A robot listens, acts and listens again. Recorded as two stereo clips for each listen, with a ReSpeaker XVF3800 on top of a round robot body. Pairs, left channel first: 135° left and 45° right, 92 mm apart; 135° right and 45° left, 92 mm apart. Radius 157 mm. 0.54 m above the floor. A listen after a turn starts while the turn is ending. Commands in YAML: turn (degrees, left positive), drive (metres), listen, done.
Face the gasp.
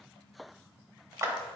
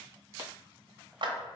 listen: true
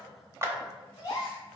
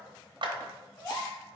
turn: -175
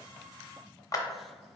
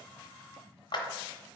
done: "I heard a gasp from this way, but can't make it out now."